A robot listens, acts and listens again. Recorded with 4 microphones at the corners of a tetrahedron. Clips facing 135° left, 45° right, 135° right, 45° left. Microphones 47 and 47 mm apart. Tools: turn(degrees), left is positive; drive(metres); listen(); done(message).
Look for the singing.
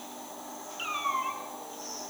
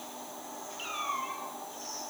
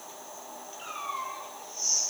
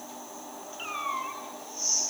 listen()
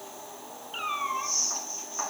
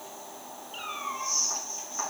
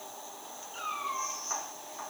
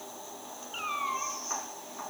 listen()
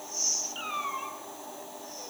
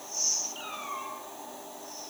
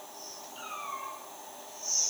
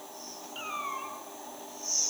done("I can't make out singing to turn to.")